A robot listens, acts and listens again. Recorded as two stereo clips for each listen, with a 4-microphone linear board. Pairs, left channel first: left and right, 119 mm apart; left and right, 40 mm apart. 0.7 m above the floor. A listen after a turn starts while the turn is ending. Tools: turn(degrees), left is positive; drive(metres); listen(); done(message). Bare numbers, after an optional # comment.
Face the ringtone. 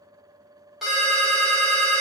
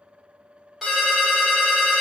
turn(-30)
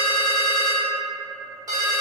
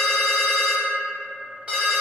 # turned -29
# So it is at 145° right.
turn(-145)
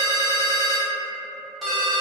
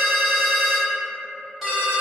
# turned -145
done("Found it: a ringtone, straight ahead.")